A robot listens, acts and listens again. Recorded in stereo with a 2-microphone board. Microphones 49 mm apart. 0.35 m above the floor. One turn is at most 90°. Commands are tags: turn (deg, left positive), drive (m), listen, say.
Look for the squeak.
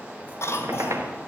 <turn deg="-90"/>
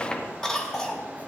<turn deg="15"/>
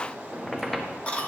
<say>Facing the squeak, 1 to 2 m away.</say>